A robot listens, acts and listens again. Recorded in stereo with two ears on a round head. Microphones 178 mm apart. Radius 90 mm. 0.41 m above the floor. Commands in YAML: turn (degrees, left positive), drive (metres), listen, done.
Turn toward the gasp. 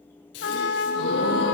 turn: 60
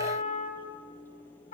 listen: true
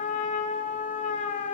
done: "I heard a gasp, but can't make it out now. It was about straight ahead or 60° left."